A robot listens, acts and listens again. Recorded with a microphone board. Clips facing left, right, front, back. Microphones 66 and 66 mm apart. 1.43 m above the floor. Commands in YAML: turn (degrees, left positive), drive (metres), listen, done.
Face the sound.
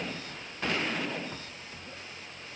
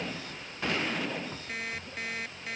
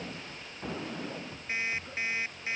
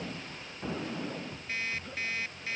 turn: -70
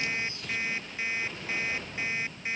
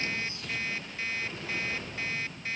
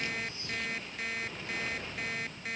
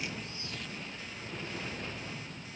turn: 20
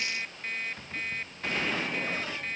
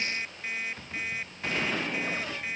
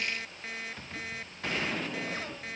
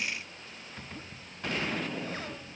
turn: -10
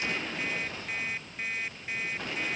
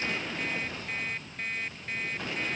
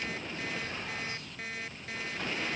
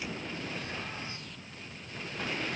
done: "Found it: an alarm clock, straight ahead."